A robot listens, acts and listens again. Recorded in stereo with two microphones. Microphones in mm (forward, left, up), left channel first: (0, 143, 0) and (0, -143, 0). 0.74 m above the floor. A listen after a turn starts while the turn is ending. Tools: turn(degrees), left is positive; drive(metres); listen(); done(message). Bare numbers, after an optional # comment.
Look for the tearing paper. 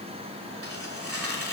# The tearing paper: about 50° right or 130° right.
turn(-50)
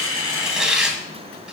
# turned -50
done("Found it: tearing paper, straight ahead, 1 to 2 m away.")